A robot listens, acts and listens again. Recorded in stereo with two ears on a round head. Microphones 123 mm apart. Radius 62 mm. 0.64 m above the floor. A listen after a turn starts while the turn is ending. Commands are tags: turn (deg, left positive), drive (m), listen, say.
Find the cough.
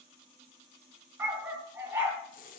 <listen/>
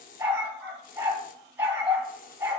<listen/>
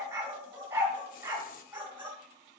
<say>I can't make out a cough, only a dog barking and a hiss.</say>